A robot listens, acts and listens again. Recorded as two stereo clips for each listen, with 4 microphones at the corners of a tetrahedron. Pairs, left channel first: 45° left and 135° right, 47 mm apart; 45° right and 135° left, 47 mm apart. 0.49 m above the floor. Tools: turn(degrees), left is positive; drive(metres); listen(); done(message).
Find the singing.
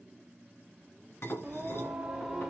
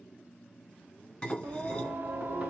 turn(degrees=135)
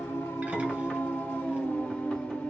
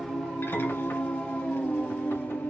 done("Facing the singing, 1 to 2 m away.")